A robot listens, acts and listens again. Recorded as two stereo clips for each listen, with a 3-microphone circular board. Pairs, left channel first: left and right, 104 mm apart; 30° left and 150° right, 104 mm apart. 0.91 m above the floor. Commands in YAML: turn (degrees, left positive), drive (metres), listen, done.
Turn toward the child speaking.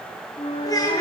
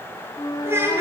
turn: 145
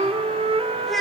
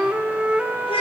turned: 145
done: "Found it: a child speaking, straight ahead, over 4 m away."